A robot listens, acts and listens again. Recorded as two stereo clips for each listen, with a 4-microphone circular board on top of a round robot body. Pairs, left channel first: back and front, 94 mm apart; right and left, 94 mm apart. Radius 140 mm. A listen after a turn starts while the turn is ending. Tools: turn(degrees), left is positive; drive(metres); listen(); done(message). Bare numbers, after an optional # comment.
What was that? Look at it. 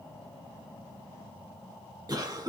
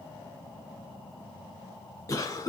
# The cough: 40° right.
turn(-40)
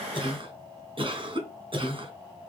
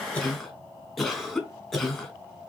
done("Found it: a cough, straight ahead.")